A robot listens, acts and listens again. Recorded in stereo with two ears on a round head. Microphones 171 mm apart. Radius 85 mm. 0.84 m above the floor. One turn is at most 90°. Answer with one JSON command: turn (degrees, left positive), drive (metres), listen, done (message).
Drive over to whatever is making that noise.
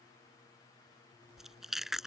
{"turn": 30}
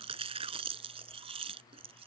{"turn": -30}
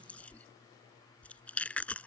{"drive": 1.0}
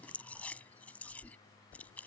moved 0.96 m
{"turn": 10}
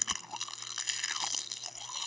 {"drive": 1.0}
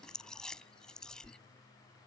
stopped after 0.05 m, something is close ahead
{"done": "Arrived at the chewing, straight ahead."}